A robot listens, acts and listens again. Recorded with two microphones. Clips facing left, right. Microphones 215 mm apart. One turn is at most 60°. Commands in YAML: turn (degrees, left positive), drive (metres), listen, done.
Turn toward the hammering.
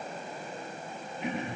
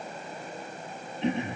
listen: true
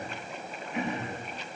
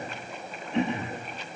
listen: true
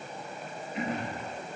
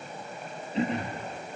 done: "I can't make out hammering, only throat clearing."